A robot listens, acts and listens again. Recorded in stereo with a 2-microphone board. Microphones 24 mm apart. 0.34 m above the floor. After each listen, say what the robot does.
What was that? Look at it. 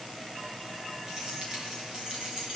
Turn 35° right.
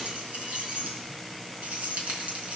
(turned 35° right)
Turn 110° right.
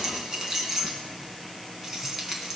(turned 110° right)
Turn 20° right.
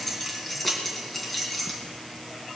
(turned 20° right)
Facing the keys jangling.